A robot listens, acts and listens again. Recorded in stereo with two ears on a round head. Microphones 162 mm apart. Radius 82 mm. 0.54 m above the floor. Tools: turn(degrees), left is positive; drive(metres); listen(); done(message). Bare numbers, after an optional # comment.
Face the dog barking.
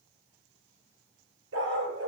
turn(-90)
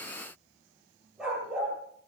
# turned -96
done("Found it: a dog barking, straight ahead.")